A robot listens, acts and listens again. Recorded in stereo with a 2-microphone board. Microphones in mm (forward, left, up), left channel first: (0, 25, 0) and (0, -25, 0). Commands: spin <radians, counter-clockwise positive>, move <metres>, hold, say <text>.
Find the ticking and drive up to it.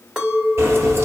spin -0.96
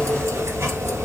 spin -1.22
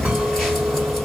move 1.0
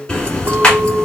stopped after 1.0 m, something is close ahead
spin 0.35
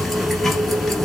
say I am next to the ticking.